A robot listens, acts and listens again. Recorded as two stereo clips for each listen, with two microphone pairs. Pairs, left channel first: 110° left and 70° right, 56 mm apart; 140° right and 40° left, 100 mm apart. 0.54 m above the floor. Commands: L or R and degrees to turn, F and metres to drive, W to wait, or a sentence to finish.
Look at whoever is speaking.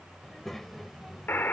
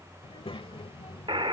R165
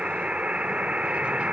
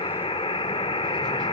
W
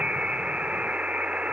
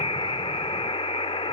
W
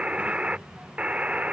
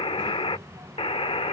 Facing the child speaking.